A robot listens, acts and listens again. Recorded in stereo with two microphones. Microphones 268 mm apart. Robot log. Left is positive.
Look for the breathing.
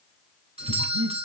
note: The breathing: about 65° right or 115° right.
cmd yaw -65
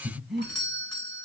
end: Found it: breathing, straight ahead.